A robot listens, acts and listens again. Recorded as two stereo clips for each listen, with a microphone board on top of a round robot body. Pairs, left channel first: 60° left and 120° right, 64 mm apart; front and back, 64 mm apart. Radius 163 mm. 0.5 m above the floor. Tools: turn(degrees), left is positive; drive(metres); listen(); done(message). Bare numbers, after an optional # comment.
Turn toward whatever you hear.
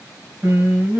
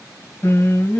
# The singing: 60° right.
turn(-60)
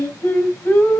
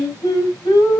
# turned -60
done("Facing the singing, 2 to 4 m away.")